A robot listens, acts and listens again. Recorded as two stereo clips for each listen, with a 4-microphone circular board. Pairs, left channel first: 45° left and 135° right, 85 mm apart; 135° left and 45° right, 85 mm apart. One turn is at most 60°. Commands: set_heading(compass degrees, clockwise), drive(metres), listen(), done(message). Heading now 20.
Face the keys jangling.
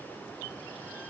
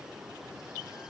listen()
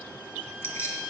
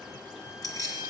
set_heading(320)
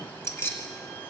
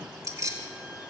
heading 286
set_heading(296)
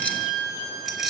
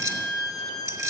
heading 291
set_heading(341)
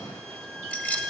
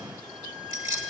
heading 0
set_heading(20)
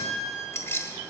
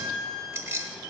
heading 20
done("Facing the keys jangling, 1 to 2 m away.")